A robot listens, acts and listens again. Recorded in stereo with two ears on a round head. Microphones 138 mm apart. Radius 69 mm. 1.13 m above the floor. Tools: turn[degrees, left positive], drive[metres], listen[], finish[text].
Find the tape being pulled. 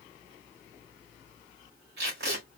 Action: turn[-90]
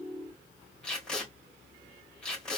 Action: finish[Facing the tape being pulled, 2 to 4 m away.]